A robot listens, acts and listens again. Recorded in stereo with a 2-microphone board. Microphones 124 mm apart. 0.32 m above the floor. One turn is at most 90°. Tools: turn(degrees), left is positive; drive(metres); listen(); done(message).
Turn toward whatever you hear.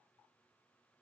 listen()
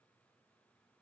listen()
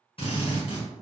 turn(degrees=50)
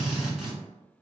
done("Found it: a drill, straight ahead.")